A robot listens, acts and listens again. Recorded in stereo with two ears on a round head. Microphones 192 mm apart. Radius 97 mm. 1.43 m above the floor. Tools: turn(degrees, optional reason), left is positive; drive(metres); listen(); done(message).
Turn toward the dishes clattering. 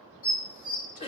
turn(degrees=20, reason="The dishes clattering: about 20° left or 160° left.")
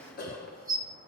done("Facing the dishes clattering.")